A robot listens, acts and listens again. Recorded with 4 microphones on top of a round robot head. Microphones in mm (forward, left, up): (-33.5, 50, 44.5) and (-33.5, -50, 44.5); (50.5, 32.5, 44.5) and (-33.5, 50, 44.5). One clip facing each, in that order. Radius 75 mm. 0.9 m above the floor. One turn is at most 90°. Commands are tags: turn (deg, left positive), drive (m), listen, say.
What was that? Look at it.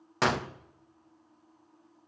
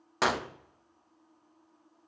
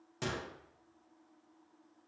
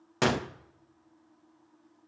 <turn deg="-90"/>
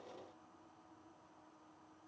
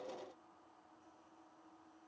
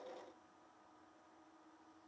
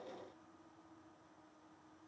<turn deg="-85"/>
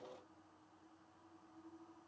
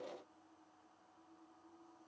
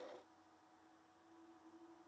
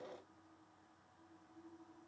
<say>I heard a gunshot from this way, but can't make it out now.</say>